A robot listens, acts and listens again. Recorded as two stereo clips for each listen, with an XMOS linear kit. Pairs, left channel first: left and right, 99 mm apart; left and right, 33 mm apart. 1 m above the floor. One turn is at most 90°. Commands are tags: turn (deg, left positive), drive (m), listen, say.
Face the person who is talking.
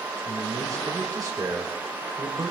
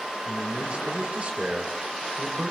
<turn deg="-35"/>
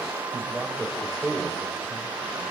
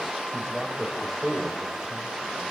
<say>Facing the man speaking, 2 to 4 m away.</say>